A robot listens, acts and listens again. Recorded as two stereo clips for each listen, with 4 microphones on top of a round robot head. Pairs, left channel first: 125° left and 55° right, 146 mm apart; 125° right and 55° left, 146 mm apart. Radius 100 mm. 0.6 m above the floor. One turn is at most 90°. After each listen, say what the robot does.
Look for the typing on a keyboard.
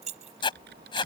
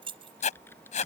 Turn 50° right.
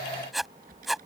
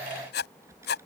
Turn 20° right.
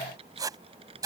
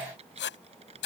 Facing the typing on a keyboard.